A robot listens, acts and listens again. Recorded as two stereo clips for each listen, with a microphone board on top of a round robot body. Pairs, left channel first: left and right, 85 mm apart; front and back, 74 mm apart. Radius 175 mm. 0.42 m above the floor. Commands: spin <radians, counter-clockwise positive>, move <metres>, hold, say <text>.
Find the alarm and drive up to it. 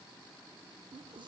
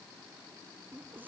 hold
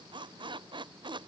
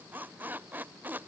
hold
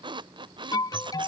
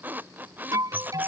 spin 2.36
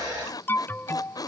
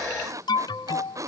spin 0.44
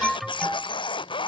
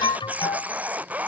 move 1.0
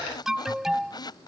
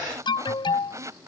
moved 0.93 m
move 1.0
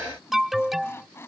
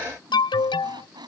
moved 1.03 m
move 1.0
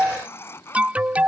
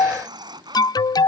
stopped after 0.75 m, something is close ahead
spin -0.26
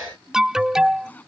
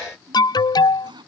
spin -0.17
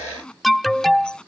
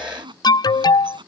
say I am next to the alarm.